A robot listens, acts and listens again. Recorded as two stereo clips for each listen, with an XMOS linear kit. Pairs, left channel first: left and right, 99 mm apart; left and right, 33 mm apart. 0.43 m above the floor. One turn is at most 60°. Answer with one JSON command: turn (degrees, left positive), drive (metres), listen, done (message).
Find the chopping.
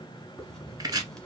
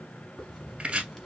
{"turn": -40}
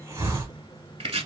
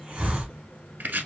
{"turn": -60}
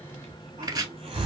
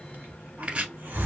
{"turn": -40}
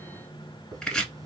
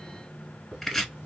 {"done": "Facing the chopping, 1 to 2 m away."}